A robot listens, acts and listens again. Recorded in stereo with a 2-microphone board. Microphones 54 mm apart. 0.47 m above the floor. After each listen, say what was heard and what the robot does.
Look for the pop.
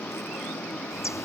Keep listening.
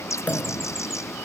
The pop: about 25° left or 155° left. Turn 25° left.
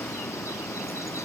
Keep listening.
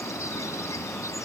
I heard a pop, but can't make it out now. It was about straight ahead or 130° left.